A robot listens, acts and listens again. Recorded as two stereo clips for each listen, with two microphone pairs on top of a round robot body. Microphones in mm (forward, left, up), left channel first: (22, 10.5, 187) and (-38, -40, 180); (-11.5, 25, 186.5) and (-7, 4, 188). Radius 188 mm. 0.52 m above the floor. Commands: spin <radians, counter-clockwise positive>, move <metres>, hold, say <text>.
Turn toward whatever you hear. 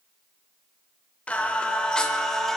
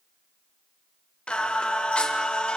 spin 2.18
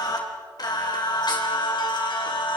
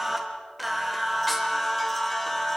spin 0.44
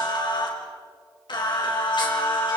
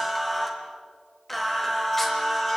spin 0.35
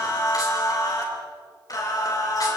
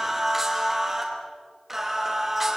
say Found it: singing, straight ahead, over 4 m away.